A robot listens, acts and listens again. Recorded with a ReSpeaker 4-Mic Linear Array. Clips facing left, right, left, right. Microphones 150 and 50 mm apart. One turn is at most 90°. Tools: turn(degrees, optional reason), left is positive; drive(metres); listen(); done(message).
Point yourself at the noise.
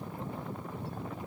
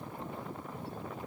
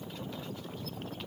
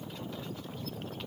listen()
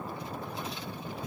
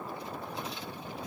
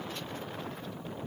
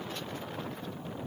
listen()
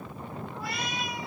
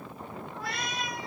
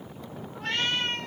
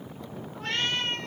turn(degrees=30)
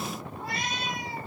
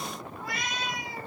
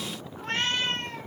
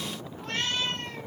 turn(degrees=90, reason="So it is at 145° left.")
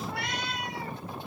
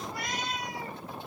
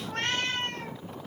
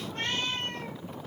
turn(degrees=90, reason="The cat meowing is now 90° left.")
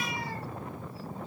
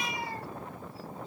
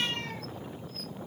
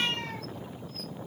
listen()
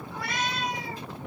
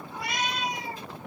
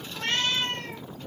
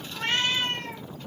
turn(degrees=-20, reason="The cat meowing is now 20° right.")
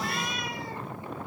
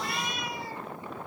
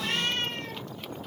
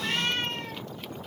done("Facing the cat meowing, 2 to 4 m away.")